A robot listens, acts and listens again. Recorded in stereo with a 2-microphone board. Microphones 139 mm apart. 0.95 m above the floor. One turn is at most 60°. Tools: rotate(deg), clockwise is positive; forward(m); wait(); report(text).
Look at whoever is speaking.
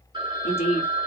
rotate(-45)
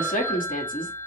rotate(-60)
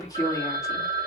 rotate(-25)
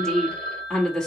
report("Found it: a woman speaking, straight ahead.")